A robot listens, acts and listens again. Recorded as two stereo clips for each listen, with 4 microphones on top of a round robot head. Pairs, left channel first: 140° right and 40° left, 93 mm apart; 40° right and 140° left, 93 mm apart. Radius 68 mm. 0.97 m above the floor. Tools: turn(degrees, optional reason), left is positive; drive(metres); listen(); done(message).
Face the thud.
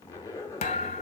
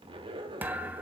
turn(degrees=-150, reason="The thud: 150° right.")
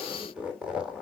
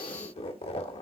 done("I heard a thud from this way, but can't make it out now.")